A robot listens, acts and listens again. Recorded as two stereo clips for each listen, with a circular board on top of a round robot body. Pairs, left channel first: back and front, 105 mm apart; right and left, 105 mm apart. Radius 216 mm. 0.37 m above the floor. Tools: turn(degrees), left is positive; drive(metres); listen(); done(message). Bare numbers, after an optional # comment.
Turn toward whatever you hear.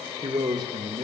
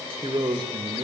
# The man speaking: 50° left.
turn(50)
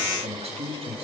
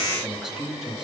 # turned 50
done("Found it: a man speaking, straight ahead.")